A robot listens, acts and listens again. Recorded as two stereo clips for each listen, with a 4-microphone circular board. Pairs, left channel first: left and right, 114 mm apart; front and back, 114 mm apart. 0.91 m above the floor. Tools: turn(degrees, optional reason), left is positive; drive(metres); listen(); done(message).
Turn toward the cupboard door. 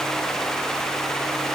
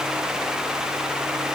listen()
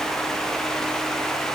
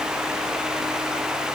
listen()
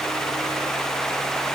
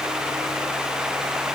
done("I can't make out a cupboard door to turn to.")